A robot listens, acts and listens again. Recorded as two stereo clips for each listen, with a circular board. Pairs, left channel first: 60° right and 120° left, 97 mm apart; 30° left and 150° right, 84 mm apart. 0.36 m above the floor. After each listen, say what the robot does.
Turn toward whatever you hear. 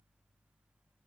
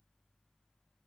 Keep listening.
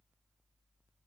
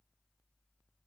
Keep listening.
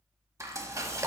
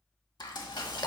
Turn 60° left.
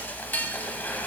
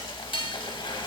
Turn 10° left.
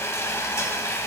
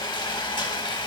Found it: frying, straight ahead, under 1 m away.